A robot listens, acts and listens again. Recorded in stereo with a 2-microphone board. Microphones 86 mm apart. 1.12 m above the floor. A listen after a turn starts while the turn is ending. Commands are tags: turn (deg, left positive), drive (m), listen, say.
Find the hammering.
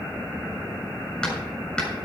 <turn deg="30"/>
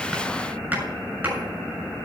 <turn deg="-20"/>
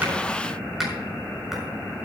<say>Found it: hammering, straight ahead, over 4 m away.</say>